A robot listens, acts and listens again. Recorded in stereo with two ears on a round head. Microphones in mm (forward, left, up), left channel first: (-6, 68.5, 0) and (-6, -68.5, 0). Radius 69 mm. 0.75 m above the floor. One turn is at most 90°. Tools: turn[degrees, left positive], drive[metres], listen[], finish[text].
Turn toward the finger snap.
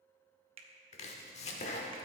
Thought: The finger snap: about 40° right or 140° right.
Action: turn[-40]
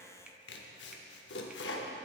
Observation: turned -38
Action: listen[]
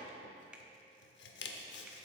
Action: listen[]
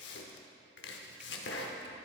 Action: finish[I heard a finger snap, but can't make it out now. It was about straight ahead or 105° right.]